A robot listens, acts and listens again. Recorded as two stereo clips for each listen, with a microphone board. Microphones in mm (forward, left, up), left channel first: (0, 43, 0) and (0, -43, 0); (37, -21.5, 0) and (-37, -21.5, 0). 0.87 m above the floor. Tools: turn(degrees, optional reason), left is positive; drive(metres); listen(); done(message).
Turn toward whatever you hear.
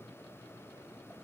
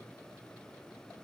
listen()
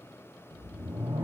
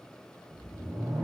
turn(degrees=-115, reason="The whoosh: 115° right.")
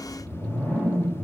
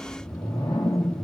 turn(degrees=10, reason="The whoosh is now 10° left.")
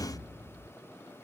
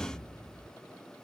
done("Found it: a whoosh, straight ahead, 1 to 2 m away.")